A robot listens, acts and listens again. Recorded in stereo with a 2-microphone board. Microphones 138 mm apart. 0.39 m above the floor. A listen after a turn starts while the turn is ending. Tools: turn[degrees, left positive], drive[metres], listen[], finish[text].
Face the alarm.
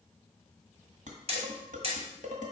Action: listen[]
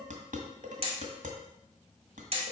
Action: listen[]
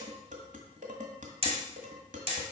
Action: finish[I can't make out an alarm to turn to.]